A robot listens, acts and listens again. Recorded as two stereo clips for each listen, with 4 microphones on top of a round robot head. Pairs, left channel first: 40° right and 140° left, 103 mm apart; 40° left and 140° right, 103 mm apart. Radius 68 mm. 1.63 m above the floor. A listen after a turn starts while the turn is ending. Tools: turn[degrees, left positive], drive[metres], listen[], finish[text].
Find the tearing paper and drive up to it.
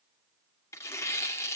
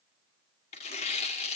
Thought: The tearing paper: 20° left.
Action: turn[20]
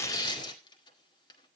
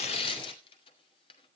Action: drive[1.0]
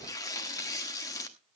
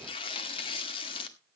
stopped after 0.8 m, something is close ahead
Thought: The tearing paper is now 10° left.
Action: turn[10]
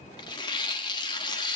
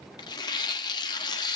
Action: finish[I am next to the tearing paper.]